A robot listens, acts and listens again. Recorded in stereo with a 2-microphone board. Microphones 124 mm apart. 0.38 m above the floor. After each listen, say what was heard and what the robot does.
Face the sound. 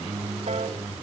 The piano: about 60° right or 120° right. Turn 60° right.
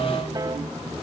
So it is at 35° right. Turn 35° right.
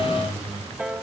The piano is now 10° right. Turn 10° right.
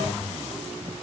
Keep listening.
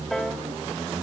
Found it: a piano, straight ahead, 2 to 4 m away.